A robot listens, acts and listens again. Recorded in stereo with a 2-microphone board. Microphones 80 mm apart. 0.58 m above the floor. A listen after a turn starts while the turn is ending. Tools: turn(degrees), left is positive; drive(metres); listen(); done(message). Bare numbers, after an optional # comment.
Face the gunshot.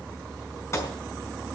# The gunshot: about 35° left or 145° left.
turn(35)
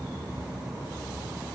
listen()
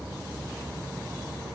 done("I heard a gunshot, but can't make it out now. It was about straight ahead or 110° left.")